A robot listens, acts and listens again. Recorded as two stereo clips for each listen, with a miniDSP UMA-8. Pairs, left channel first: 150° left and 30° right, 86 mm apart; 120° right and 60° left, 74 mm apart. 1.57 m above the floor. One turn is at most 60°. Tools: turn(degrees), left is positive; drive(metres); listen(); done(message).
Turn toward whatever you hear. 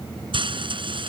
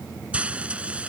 turn(degrees=-15)
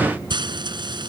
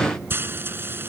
done("Found it: frying, straight ahead.")